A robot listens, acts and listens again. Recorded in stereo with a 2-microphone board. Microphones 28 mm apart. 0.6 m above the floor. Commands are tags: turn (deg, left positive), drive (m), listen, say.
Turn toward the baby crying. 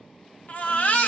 <turn deg="55"/>
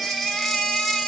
<say>Facing the baby crying, under 1 m away.</say>